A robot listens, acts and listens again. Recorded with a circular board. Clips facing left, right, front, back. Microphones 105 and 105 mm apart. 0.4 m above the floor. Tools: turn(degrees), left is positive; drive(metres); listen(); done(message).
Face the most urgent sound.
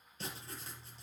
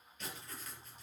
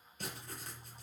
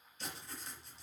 listen()
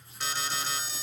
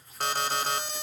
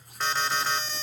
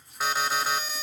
turn(degrees=-100)
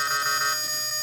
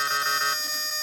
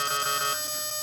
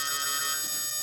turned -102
done("Found it: an alarm, straight ahead.")